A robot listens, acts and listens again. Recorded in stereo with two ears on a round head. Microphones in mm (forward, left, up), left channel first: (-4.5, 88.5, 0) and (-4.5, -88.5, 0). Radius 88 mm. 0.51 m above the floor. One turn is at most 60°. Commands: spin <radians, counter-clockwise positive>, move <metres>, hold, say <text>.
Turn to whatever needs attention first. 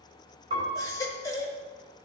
spin 0.35
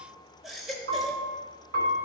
say Facing the baby crying.